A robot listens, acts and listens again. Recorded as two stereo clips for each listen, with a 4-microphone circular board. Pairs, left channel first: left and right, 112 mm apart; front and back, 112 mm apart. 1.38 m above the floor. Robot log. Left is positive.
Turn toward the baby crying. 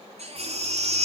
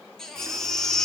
note: The baby crying: 85° right.
cmd yaw -85
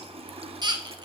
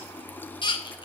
note: The baby crying is now 40° right.
cmd yaw -40
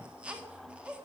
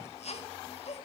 note: The baby crying is now 10° right.
cmd yaw -10
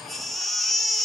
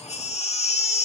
end: Found it: a baby crying, straight ahead.